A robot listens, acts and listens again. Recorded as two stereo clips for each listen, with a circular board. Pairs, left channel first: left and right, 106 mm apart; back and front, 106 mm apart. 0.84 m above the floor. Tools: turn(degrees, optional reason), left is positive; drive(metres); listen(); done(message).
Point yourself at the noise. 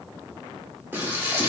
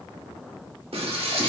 turn(degrees=-20, reason="The frying: 20° right.")
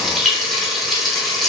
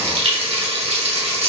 done("Found it: frying, straight ahead.")